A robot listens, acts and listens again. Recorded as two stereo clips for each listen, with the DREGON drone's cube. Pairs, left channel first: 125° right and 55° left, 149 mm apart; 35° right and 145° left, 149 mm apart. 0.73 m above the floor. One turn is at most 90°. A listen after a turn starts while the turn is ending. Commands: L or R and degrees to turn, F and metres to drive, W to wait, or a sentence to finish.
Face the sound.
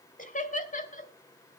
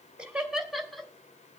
R90
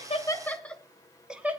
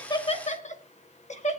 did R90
R20
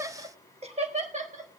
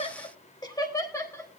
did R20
L35
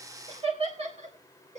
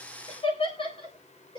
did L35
L20
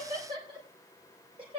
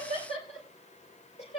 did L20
Found it: laughter, straight ahead.